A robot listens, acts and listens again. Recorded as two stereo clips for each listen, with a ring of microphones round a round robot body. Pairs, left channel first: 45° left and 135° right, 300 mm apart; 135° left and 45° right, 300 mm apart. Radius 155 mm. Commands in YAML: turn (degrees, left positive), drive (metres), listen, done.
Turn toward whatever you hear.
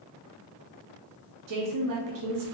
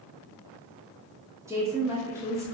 turn: -125
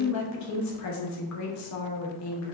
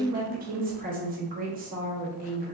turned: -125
turn: 15
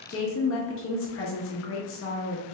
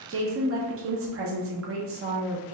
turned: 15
done: "Facing the woman speaking, under 1 m away."